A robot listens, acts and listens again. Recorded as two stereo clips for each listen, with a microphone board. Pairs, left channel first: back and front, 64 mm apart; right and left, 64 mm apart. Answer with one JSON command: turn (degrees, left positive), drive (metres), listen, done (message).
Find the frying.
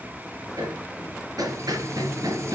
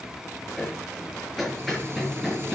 {"turn": 40}
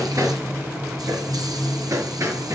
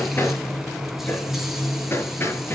{"done": "Facing the frying."}